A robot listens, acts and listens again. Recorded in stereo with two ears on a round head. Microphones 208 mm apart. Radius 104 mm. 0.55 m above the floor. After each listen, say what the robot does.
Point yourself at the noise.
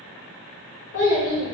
Turn 45° left.
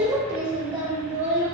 Turn 35° right.
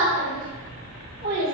Turn 50° right.
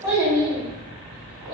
Turn 20° right.
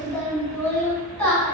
Facing the child speaking, 2 to 4 m away.